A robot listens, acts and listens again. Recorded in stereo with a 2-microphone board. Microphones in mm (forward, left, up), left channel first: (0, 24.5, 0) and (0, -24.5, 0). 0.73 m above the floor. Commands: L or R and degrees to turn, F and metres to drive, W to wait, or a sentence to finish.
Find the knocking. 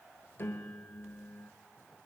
W
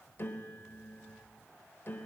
W
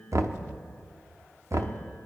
R70
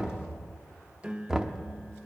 R15
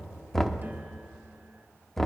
Found it: knocking, straight ahead.